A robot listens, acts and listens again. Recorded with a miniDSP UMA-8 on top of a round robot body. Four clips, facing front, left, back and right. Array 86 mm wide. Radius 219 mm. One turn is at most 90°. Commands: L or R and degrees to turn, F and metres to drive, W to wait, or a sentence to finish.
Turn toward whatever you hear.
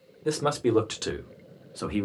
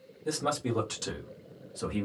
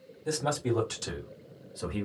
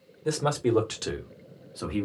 R20
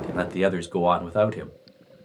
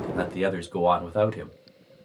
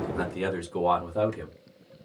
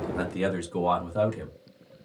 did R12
L25
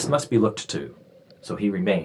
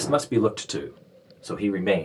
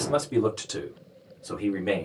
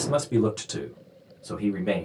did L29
L40
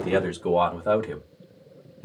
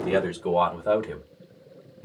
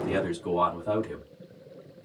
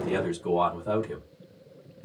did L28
L20
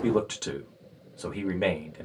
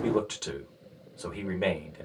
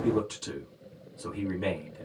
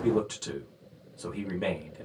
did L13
L10
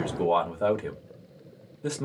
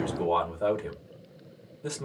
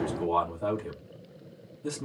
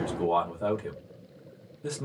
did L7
Found it: a man speaking, straight ahead, 1 to 2 m away.